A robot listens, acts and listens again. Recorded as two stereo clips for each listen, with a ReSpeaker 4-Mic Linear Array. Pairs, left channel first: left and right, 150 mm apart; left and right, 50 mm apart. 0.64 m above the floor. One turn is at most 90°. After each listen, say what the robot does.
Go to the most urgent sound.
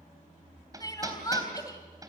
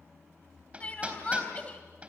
Turn 25° left.
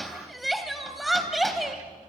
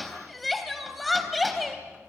Drive 1.0 m forward.
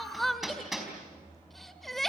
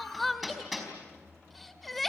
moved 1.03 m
Drive 1.0 m forward.
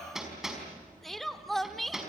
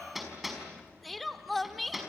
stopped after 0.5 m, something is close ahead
Arrived at the crying, straight ahead.